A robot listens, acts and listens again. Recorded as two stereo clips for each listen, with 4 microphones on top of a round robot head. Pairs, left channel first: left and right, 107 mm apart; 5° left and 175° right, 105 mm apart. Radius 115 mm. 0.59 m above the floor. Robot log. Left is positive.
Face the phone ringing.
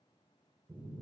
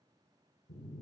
cmd idle
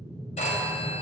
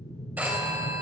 note: The phone ringing: 110° left.
cmd yaw +110
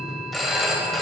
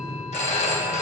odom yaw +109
end: Found it: a phone ringing, straight ahead.